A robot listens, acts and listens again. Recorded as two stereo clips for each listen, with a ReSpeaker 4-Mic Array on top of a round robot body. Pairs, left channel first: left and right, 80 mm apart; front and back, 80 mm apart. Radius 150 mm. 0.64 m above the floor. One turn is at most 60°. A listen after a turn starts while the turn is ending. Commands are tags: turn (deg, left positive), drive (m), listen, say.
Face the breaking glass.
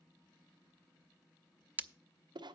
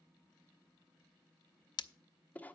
<turn deg="-25"/>
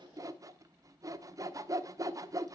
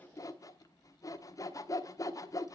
<say>I heard breaking glass from this way, but can't make it out now.</say>